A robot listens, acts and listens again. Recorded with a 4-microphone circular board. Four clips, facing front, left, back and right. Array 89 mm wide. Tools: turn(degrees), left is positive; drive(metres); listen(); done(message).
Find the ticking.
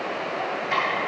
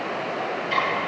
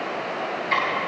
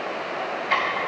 turn(degrees=-75)
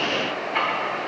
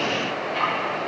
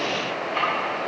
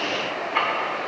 listen()
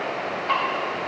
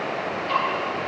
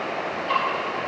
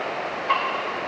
turn(degrees=-25)
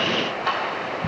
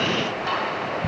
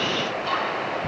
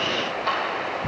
turn(degrees=10)
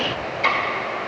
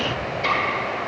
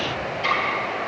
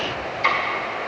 done("Facing the ticking, 2 to 4 m away.")